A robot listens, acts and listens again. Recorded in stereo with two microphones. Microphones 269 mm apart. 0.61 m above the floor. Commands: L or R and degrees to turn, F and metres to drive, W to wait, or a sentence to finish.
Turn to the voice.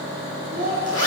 R35
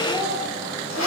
W
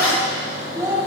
R15
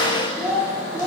R10
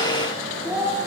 R10
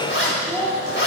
R10
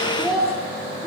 Facing the child speaking, over 4 m away.